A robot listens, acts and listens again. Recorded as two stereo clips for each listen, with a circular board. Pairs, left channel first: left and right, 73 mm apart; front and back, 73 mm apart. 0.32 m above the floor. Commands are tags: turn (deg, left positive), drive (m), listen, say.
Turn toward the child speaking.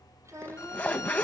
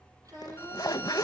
<turn deg="-140"/>
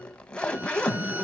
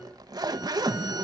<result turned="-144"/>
<listen/>
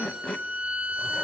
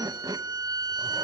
<listen/>
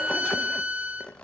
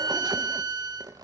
<say>I heard a child speaking from this way, but can't make it out now.</say>